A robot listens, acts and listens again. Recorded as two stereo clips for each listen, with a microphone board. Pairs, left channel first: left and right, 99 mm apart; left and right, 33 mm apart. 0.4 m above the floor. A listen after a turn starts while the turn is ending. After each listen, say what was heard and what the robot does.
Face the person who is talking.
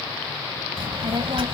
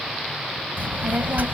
The child speaking: about 60° right or 120° right. Turn 60° right.
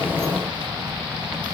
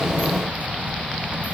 So it is at 50° right. Turn 50° right.
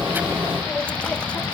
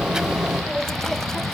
The child speaking is now 10° left. Turn 10° left.
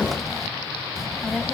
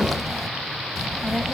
Found it: a child speaking, straight ahead.